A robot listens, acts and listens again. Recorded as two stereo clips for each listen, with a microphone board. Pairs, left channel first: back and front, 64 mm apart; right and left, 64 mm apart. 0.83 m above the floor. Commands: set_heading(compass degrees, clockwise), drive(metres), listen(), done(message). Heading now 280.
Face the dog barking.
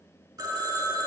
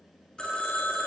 listen()
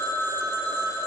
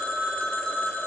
listen()
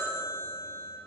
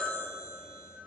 done("I can't make out a dog barking, only a phone ringing.")